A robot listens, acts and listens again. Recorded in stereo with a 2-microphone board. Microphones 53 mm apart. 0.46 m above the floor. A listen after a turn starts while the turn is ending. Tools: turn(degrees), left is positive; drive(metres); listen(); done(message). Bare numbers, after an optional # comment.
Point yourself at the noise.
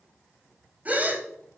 # The gasp: about 30° right or 150° right.
turn(-30)
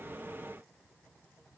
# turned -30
listen()
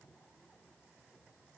done("I heard a gasp, but can't make it out now. It was about straight ahead or 120° right.")